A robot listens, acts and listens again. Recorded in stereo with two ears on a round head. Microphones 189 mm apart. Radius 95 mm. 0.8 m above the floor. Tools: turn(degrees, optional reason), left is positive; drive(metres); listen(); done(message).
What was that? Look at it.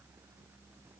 listen()
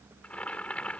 turn(degrees=30)
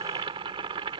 turn(degrees=-25, reason="So it is at 25° right.")
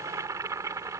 turn(degrees=-15, reason="The boiling is now 15° right.")
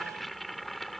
done("Found it: boiling, straight ahead.")